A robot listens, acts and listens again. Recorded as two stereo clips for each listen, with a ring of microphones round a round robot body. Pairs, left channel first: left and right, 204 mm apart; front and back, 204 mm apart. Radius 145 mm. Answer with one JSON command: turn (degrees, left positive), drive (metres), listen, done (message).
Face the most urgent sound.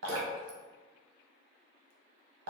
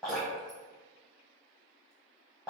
{"listen": true}
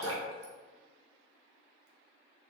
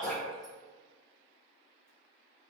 {"listen": true}
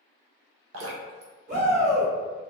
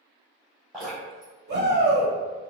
{"turn": -140}
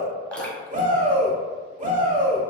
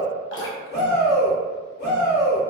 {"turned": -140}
{"turn": -45}
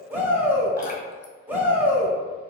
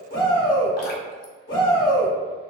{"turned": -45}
{"turn": -10}
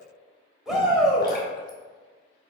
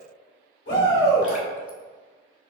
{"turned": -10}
{"done": "Facing the shout, 1 to 2 m away."}